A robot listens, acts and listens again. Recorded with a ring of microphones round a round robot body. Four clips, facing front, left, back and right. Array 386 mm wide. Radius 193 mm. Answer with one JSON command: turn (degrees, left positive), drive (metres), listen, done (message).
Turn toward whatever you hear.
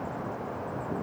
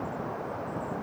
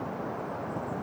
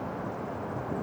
{"listen": true}
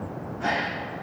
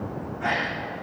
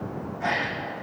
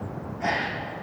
{"turn": -60}
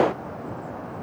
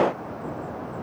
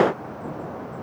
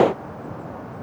{"done": "I heard a gasp from this way, but can't make it out now."}